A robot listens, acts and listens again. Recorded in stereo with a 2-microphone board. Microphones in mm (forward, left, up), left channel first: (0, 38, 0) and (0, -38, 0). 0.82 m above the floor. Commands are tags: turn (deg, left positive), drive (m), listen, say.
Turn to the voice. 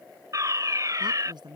<turn deg="-90"/>
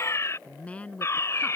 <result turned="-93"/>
<turn deg="20"/>
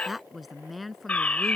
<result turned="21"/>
<say>Found it: a woman speaking, straight ahead.</say>